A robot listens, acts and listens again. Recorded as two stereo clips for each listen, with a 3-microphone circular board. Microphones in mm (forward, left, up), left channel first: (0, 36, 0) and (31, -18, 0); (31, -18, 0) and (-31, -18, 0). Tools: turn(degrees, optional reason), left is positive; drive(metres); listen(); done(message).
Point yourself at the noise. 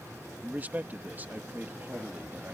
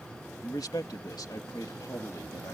done("Found it: a man speaking, straight ahead.")